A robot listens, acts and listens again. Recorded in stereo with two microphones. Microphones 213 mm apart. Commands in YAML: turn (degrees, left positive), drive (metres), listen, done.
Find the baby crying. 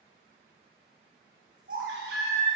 turn: -65
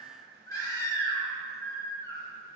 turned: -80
turn: 15
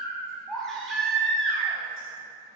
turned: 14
done: "Facing the baby crying."